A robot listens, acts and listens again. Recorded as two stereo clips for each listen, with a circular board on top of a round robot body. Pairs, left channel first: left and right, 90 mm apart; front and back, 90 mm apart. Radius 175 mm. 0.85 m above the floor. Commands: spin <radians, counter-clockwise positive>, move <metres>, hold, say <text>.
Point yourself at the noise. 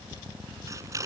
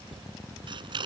spin -2.53
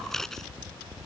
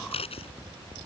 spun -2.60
say Found it: scissors, straight ahead.